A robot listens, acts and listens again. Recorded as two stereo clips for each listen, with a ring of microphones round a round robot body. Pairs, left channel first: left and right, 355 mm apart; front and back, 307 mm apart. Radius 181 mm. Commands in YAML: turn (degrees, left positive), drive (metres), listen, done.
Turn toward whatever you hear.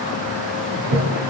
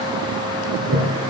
turn: -115
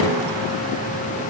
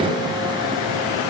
listen: true
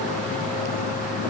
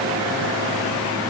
listen: true
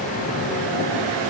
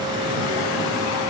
done: "I heard a toilet flushing from this way, but can't make it out now."